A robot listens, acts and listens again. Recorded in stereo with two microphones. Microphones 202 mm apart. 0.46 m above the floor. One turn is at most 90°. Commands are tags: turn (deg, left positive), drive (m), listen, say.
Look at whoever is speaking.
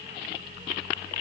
<listen/>
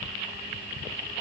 <listen/>
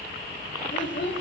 <turn deg="65"/>
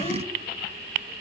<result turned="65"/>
<listen/>
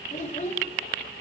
<turn deg="40"/>
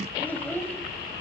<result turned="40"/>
<turn deg="10"/>
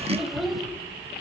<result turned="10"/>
<say>Found it: a child speaking, straight ahead, 1 to 2 m away.</say>